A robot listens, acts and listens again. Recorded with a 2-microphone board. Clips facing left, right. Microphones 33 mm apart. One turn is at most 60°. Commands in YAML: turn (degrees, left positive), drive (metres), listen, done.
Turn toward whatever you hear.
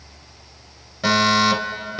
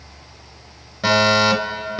turn: -30
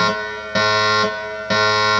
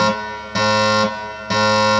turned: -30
turn: 20
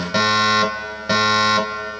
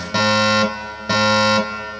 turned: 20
done: "Found it: a fire alarm, straight ahead."